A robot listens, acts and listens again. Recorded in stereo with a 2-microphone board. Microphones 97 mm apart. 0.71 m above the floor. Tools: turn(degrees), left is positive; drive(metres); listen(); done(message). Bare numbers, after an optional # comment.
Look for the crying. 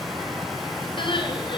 # The crying: about 55° left or 125° left.
turn(55)
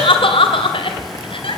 # So it is at 65° left.
turn(65)
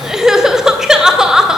done("Facing the crying, 2 to 4 m away.")